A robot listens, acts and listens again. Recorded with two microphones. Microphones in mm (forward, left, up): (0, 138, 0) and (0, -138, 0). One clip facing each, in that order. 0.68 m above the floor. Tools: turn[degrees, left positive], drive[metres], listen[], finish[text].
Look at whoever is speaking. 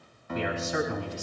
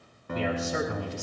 Thought: The man speaking: about 40° right or 140° right.
Action: turn[-40]
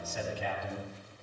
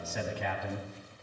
Thought: So it is at 105° right.
Action: turn[-105]
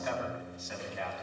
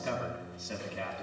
Thought: The man speaking is now 35° right.
Action: turn[-35]
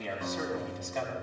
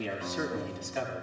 Thought: The man speaking is now 10° right.
Action: turn[-10]
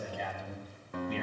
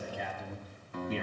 Action: finish[Facing the man speaking.]